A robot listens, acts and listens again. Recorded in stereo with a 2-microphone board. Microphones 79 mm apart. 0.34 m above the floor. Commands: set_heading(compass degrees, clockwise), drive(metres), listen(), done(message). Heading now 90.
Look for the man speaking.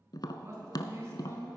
set_heading(125)
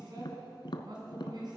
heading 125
set_heading(230)
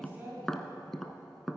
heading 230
set_heading(255)
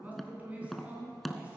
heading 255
set_heading(275)
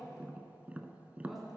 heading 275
listen()
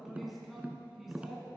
done("Found it: a man speaking, straight ahead.")